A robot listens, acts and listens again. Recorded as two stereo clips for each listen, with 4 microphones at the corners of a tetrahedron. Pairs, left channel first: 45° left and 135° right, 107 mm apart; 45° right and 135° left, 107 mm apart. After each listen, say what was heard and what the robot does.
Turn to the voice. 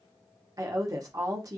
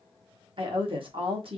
The woman speaking: 170° left. Turn 170° left.
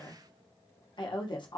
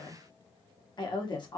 Facing the woman speaking.